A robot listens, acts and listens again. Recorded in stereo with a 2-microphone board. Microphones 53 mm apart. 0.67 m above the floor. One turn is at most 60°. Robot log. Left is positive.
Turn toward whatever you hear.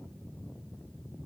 cmd idle
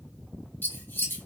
note: The scissors: about 40° left or 140° left.
cmd yaw +40
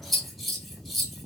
end: Facing the scissors, under 1 m away.